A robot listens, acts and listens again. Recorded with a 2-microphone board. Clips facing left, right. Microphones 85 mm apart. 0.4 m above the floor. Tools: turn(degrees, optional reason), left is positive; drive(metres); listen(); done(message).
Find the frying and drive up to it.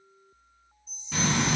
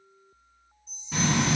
turn(degrees=-30)
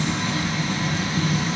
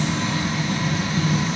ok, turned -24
turn(degrees=-140, reason="So it is at 140° right.")
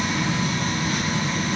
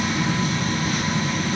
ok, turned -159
turn(degrees=15, reason="The frying is now 15° left.")
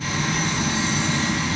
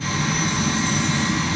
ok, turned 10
drive(metres=1.0)
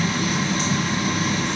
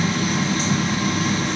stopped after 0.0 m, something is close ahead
done("Blocked. The frying is further on, straight ahead.")